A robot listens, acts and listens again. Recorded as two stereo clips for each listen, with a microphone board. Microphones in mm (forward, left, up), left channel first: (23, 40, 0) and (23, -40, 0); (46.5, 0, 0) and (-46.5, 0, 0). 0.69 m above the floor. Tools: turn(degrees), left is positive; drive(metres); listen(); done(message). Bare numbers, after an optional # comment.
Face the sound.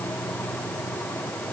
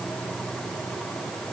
listen()
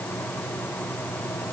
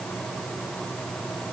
listen()
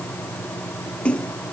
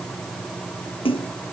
# The splash: 15° left.
turn(15)
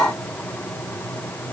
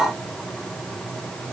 done("I heard a splash from this way, but can't make it out now.")